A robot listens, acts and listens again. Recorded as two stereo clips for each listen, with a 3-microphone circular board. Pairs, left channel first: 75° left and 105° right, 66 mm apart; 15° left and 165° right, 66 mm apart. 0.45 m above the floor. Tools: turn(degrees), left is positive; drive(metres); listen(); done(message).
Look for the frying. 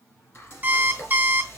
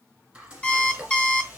turn(degrees=120)
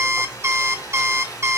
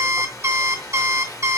turn(degrees=35)
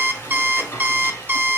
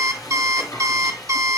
turn(degrees=20)
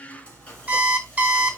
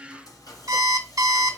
done("Found it: frying, straight ahead.")